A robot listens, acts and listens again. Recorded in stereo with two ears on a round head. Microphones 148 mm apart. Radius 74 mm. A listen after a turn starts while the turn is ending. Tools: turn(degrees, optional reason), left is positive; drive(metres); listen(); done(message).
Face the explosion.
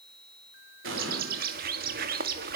turn(degrees=-90)
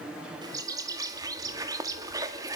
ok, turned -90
done("Facing where the explosion came from. I can't hear it now.")